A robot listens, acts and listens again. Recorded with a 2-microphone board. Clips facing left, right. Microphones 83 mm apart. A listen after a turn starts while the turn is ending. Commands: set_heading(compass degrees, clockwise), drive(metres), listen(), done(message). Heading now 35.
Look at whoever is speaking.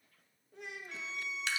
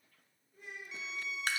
set_heading(305)
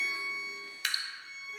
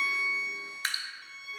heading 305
listen()
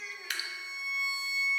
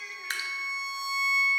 listen()
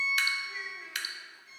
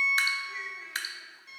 done("I heard a child speaking from this way, but can't make it out now.")